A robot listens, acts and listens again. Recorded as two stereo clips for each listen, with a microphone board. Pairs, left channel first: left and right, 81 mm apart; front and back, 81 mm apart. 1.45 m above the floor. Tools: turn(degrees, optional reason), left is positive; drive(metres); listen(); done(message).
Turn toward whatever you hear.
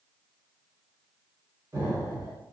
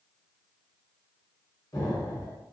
turn(degrees=-45, reason="The explosion: 45° right.")
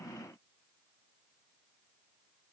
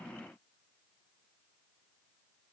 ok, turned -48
done("Facing where the explosion came from. I can't hear it now.")